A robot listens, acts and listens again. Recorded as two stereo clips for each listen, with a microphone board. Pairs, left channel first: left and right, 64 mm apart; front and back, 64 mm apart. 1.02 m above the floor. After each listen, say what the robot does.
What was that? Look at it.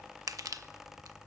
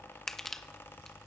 Turn 85° right.
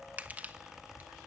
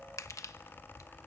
Turn 30° right.
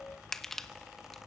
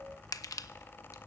Found it: crushing, straight ahead.